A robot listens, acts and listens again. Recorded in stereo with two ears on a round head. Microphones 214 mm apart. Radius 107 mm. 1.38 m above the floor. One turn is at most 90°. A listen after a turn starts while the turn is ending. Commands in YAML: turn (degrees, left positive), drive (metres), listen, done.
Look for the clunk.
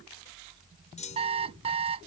turn: 30
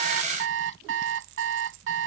listen: true
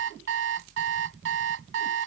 done: "I heard a clunk, but can't make it out now. It was about straight ahead or 120° left."